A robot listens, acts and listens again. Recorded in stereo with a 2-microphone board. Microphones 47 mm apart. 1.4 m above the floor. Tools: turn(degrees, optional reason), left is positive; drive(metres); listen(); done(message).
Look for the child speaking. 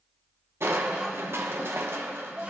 turn(degrees=-35, reason="The child speaking: about 35° right or 145° right.")
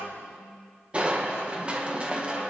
turn(degrees=-105, reason="So it is at 105° right.")
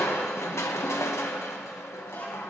turn(degrees=35, reason="The child speaking is now 35° left.")
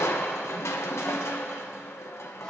listen()
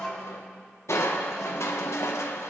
turn(degrees=10, reason="The child speaking is now 10° left.")
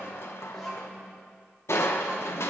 done("Facing the child speaking, over 4 m away.")